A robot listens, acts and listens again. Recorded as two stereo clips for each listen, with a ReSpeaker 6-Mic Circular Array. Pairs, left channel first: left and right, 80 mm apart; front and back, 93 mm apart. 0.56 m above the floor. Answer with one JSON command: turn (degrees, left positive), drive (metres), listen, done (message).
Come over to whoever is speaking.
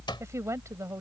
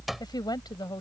{"turn": -40}
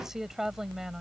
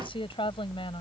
{"drive": 1.0}
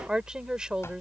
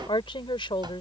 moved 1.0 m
{"turn": -10}
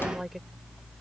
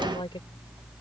{"listen": true}
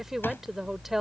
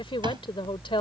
{"drive": 1.0}
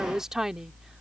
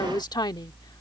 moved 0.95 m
{"turn": -10}
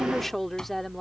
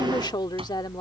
{"drive": 1.0}
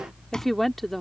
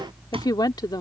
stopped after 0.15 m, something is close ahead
{"done": "I am next to the woman speaking."}